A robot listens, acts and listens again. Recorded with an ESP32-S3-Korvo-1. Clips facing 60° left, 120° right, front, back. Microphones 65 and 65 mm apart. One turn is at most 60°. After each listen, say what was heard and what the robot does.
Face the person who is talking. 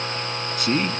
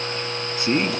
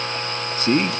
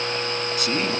The man speaking: 55° right. Turn 55° right.
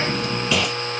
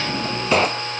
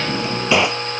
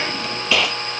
Keep listening.
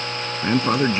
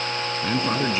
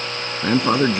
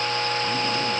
Found it: a man speaking, straight ahead.